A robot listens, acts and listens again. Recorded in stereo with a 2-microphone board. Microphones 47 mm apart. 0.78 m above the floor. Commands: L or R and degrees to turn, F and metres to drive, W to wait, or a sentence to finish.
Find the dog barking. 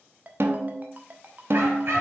R55
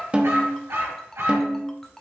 R75
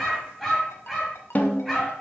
Found it: a dog barking, straight ahead.